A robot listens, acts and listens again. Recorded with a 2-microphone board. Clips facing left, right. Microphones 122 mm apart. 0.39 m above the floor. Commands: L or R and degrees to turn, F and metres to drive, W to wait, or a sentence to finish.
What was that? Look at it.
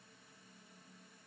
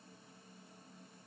W
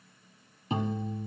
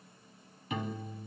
L30
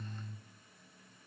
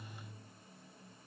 L120
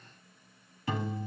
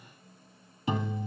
R20
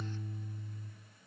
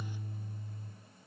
R10
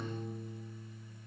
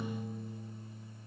Found it: a piano, straight ahead.